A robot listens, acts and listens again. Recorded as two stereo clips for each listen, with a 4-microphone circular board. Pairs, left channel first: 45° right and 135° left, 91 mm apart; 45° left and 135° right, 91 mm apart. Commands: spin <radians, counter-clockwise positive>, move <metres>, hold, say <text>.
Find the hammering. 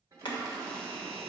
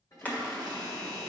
spin -0.44
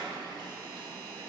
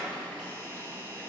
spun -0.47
hold
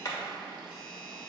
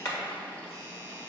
say Found it: hammering, straight ahead, 1 to 2 m away.